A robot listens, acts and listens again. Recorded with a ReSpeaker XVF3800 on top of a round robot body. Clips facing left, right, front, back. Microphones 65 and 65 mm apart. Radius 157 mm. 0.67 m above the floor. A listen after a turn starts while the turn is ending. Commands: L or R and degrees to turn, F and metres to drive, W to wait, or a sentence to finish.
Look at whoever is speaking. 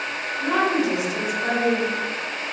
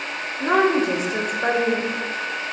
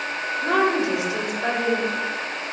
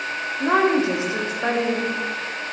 R125
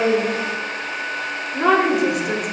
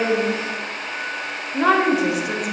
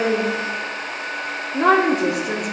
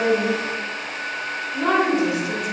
Facing the woman speaking.